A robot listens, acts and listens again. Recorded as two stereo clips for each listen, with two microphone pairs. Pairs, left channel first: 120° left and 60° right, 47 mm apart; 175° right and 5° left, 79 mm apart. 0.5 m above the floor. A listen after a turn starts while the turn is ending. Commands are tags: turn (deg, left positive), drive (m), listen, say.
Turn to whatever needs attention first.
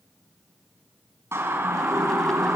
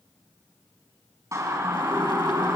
<turn deg="-40"/>
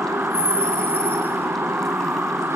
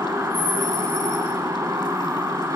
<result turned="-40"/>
<turn deg="-40"/>
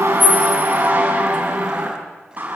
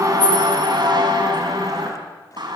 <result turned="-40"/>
<turn deg="-10"/>
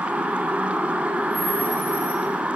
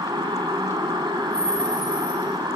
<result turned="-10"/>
<say>Facing the siren, over 4 m away.</say>